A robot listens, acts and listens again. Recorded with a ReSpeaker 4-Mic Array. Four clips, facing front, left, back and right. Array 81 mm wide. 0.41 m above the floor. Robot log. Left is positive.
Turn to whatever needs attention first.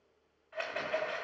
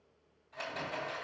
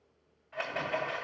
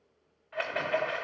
cmd idle
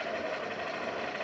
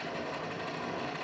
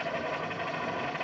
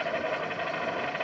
cmd idle
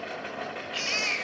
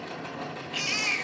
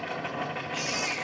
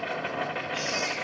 note: The baby crying: 55° left.
cmd yaw +55
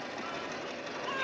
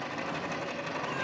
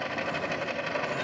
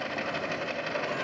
cmd idle
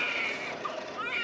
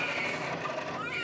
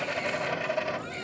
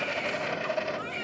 end: Found it: a baby crying, straight ahead, 1 to 2 m away.